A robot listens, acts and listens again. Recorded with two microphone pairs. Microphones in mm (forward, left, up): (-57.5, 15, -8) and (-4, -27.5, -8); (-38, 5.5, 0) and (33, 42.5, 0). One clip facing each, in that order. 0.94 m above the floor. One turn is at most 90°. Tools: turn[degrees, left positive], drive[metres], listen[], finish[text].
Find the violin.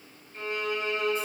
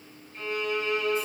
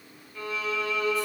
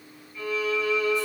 Thought: The violin: 175° right.
Action: turn[-90]
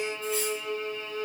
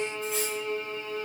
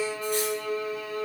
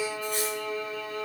Thought: The violin is now 95° right.
Action: turn[-90]
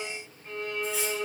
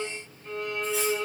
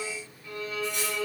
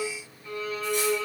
Thought: The violin is now 20° right.
Action: turn[-20]
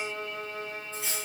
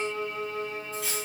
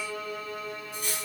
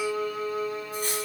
Action: finish[Found it: a violin, straight ahead, 1 to 2 m away.]